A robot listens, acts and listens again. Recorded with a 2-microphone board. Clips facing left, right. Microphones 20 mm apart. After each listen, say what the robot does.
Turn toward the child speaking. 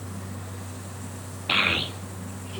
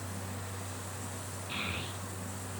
Turn 65° left.
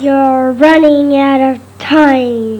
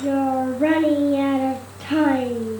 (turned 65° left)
Turn 50° left.
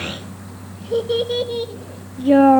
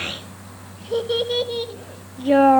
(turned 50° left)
Turn 10° right.
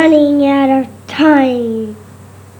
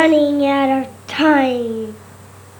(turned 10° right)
Facing the child speaking.